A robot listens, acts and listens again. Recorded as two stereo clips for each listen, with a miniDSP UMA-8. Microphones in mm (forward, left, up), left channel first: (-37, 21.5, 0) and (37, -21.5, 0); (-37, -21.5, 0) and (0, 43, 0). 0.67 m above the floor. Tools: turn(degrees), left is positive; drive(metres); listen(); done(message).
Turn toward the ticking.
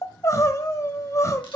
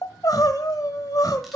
listen()
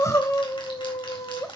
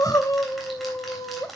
listen()
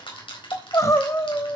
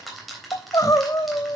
turn(degrees=150)
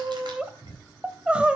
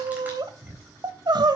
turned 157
done("Found it: ticking, straight ahead, 2 to 4 m away.")